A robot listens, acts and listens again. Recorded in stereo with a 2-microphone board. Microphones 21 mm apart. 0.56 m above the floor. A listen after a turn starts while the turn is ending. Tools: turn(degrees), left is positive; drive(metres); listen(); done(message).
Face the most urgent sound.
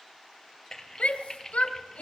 turn(degrees=90)
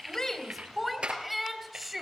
done("Facing the shout.")